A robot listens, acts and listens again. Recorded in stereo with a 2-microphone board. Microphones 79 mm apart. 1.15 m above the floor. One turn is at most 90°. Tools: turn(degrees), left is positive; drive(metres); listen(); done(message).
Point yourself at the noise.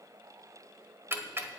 turn(degrees=-30)
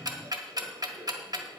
turn(degrees=-90)
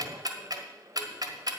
turn(degrees=-65)
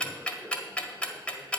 turn(degrees=15)
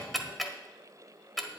done("Found it: ticking, straight ahead, 1 to 2 m away.")